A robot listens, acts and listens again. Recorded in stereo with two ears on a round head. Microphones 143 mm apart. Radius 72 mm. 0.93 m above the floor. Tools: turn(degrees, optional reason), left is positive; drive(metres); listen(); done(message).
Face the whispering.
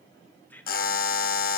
turn(degrees=30)
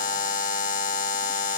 listen()
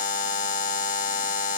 listen()
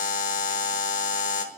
done("I heard whispering, but can't make it out now. It was about 20° right or 140° left.")